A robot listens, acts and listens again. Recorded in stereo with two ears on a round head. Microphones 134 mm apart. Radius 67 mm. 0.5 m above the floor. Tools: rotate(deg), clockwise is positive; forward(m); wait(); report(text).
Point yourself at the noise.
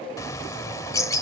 rotate(-20)
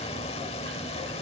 rotate(-135)
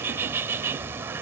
rotate(15)
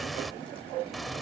report("Facing the bird.")